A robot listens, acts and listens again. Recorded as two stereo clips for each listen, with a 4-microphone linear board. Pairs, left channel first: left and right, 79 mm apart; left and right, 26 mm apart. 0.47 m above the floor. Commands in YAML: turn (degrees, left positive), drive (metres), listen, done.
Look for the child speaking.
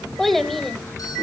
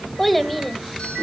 turn: 30
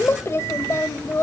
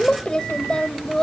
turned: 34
turn: 145
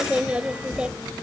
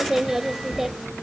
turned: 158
turn: -15
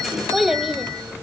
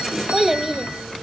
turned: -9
done: "Facing the child speaking, 1 to 2 m away."